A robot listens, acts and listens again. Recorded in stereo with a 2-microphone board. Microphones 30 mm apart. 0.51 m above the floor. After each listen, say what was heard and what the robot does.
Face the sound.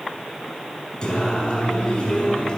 The singing: about 30° left or 150° left. Turn 30° left.
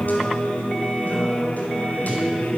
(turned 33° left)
So it is at 105° left. Turn 105° left.
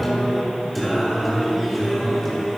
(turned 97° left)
Found it: singing, straight ahead.